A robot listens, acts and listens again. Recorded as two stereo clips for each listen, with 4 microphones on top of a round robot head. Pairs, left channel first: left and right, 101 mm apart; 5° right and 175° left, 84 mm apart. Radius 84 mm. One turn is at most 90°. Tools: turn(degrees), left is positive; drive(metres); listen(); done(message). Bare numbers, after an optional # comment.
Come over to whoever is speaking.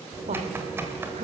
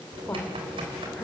# The woman speaking: 80° right.
turn(-80)
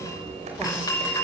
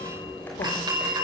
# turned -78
listen()
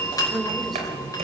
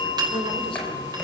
listen()
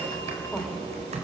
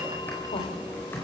done("I heard a woman speaking from this way, but can't make it out now. I did not reach it.")